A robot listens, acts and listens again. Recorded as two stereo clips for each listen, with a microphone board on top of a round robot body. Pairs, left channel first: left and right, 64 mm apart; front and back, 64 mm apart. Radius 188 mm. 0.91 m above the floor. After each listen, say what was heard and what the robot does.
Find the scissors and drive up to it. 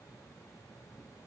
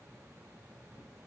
Keep listening.
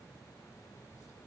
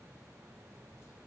Keep listening.
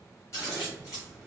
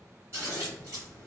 The scissors: 130° left. Turn 130° left.
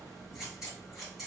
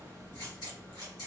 Keep listening.
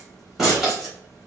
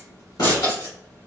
Drive 1.0 m forward.
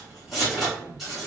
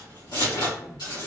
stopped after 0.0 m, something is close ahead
Blocked. The scissors is further on, straight ahead.